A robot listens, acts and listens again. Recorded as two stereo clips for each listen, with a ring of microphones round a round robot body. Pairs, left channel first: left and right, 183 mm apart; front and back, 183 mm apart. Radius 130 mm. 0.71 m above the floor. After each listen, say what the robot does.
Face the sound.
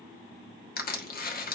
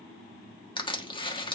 Turn 60° left.
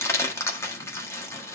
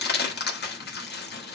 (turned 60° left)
Turn 15° left.
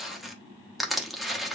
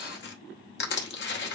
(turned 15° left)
Found it: crushing, straight ahead.